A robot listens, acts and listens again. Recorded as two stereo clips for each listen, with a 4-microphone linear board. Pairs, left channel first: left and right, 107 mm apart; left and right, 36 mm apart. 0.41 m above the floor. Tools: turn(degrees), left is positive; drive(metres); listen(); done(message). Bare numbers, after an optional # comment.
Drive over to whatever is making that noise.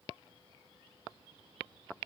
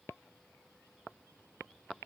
listen()
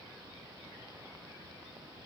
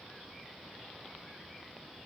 listen()
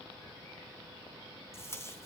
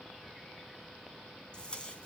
# The tape being pulled: about 30° left or 150° left.
turn(30)
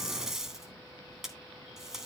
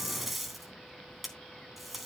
drive(1.0)
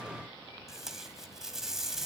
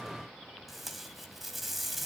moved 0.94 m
drive(1.0)
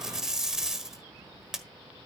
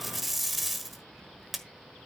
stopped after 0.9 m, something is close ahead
done("Arrived at the tape being pulled, straight ahead.")